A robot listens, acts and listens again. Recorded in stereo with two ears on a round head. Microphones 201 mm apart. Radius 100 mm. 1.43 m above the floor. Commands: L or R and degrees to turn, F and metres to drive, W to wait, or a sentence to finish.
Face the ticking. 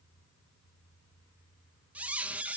W
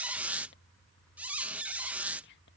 W
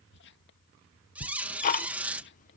L35
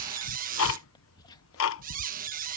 L110
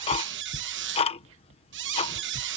L25
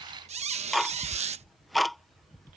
Found it: ticking, straight ahead.